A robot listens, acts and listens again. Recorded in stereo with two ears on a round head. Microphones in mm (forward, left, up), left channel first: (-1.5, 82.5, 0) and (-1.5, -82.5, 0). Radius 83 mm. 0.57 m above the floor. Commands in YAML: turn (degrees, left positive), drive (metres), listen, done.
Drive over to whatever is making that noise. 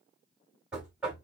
turn: -30
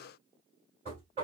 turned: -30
turn: -145
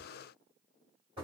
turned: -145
turn: -30
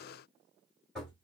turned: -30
drive: 1.0
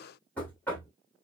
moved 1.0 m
turn: 10
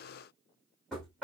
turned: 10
drive: 1.0
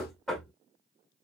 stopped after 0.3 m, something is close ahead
done: "Arrived at the knocking, straight ahead."